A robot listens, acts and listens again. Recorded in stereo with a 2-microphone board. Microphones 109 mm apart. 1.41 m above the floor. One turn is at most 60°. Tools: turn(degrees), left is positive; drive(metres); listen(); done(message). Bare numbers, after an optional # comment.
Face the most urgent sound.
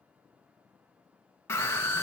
# The scream: about 25° left or 155° left.
turn(25)
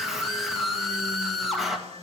done("Facing the scream.")